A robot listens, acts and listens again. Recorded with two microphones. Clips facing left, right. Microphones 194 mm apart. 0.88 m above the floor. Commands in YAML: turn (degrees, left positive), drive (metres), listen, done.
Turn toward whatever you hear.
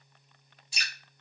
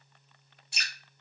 turn: -60
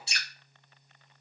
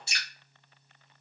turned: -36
turn: -55
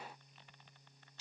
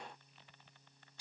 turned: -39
turn: -15
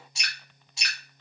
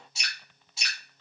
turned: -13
done: "Found it: dripping, straight ahead."